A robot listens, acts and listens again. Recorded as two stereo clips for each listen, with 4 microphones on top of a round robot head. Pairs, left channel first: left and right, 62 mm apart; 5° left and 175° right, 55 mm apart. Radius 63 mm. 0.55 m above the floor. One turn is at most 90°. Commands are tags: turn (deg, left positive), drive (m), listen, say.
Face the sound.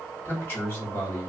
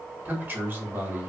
<turn deg="90"/>
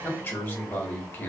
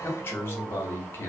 <turn deg="45"/>
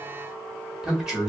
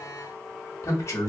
<turn deg="-10"/>
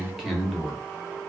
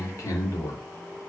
<say>Facing the man speaking.</say>